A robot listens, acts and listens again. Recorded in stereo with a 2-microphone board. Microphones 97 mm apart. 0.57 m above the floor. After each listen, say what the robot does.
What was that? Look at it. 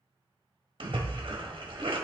Turn 60° right.
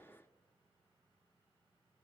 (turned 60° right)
Keep listening.
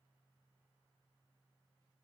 I heard a splash, but can't make it out now. It was about straight ahead or 60° right.